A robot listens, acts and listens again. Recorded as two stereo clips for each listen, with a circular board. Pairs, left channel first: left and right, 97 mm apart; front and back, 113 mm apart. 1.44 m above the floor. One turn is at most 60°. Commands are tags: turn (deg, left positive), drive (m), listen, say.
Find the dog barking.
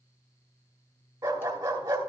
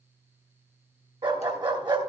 <turn deg="-60"/>
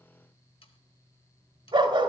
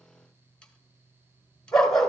<turn deg="-60"/>
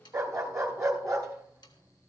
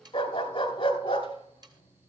<turn deg="-35"/>
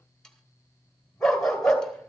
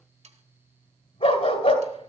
<say>Facing the dog barking.</say>